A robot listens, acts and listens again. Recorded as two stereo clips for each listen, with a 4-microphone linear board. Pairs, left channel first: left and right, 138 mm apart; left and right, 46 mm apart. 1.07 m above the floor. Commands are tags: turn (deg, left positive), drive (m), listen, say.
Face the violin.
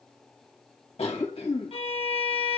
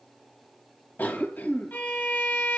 <turn deg="45"/>
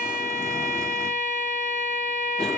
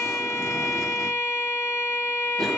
<turn deg="85"/>
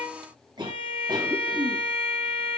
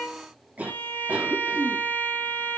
<turn deg="45"/>
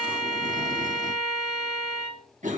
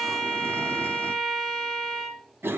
<say>Facing the violin.</say>